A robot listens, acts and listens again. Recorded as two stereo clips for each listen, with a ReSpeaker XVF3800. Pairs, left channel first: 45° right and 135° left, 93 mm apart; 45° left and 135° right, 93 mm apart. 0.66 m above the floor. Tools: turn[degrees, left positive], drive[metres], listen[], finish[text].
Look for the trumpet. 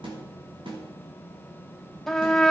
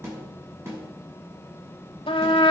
Thought: The trumpet: 40° left.
Action: turn[40]
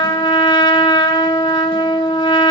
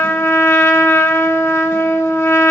Thought: The trumpet is now 15° right.
Action: turn[-15]
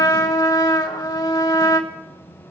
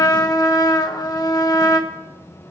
Action: finish[Facing the trumpet, 1 to 2 m away.]